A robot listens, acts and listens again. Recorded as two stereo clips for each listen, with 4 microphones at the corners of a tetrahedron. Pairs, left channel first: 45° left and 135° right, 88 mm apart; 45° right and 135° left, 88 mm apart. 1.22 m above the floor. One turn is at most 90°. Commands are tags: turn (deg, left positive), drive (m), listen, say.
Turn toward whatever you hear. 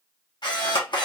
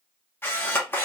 <turn deg="20"/>
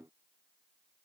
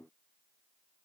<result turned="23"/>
<listen/>
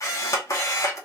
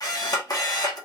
<say>Facing the camera shutter.</say>